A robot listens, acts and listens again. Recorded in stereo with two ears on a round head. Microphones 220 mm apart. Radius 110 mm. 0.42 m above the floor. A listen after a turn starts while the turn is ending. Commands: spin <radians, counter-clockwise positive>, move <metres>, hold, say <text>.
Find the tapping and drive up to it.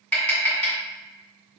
spin 0.52
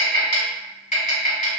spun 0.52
spin 2.53
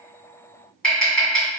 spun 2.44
move 1.0
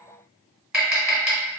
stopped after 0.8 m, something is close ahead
say I am next to the tapping.